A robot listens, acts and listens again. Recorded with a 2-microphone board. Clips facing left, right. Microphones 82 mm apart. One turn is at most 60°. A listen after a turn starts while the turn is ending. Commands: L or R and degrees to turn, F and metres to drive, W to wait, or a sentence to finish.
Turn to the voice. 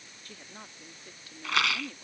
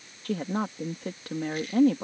R60
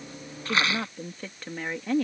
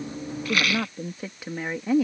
R10
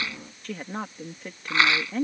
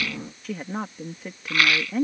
Facing the woman speaking.